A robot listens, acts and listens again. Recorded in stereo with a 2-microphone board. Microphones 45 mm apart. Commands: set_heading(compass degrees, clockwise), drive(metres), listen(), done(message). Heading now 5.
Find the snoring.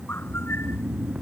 set_heading(55)
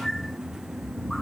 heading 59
set_heading(139)
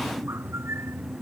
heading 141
listen()
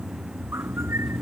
done("Facing the snoring.")